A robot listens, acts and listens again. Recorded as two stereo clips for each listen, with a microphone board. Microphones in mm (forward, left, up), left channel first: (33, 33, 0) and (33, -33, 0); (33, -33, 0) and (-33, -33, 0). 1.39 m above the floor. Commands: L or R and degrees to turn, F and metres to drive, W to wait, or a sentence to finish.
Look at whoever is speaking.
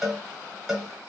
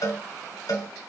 W
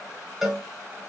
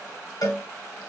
W
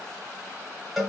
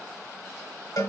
I can't make out anyone speaking, only a cowbell.